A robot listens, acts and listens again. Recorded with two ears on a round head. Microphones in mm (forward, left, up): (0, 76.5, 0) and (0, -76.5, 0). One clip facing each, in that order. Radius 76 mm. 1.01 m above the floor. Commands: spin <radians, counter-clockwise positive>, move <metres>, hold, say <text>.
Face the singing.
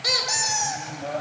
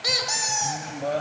spin -0.70
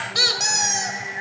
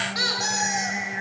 spin -2.09
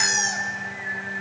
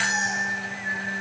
spin -0.70
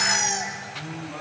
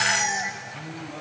spin -0.26
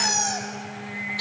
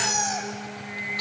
say Found it: singing, straight ahead.